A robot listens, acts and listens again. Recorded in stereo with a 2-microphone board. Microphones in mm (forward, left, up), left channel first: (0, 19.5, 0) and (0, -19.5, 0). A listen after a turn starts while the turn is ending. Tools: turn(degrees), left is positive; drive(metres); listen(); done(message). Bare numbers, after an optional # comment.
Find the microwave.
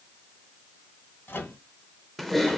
turn(90)
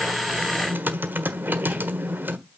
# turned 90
listen()
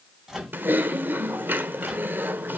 done("Facing the microwave.")